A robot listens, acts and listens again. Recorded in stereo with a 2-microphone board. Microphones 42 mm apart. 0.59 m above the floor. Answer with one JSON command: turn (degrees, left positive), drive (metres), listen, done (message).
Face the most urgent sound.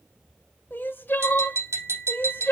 {"turn": 50}
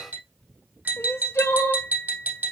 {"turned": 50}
{"turn": 85}
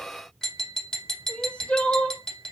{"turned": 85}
{"turn": 30}
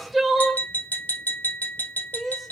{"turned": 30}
{"done": "Facing the crying."}